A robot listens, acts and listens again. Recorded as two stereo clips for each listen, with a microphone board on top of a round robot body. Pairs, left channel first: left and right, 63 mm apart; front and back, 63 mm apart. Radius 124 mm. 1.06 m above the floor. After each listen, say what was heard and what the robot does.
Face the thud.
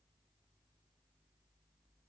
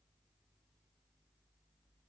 Keep listening.
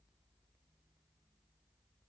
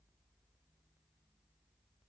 Keep listening.
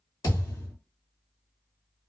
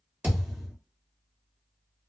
The thud: 120° left. Turn 120° left.
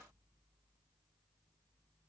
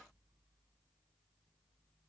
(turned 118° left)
Facing where the thud came from. I can't hear it now.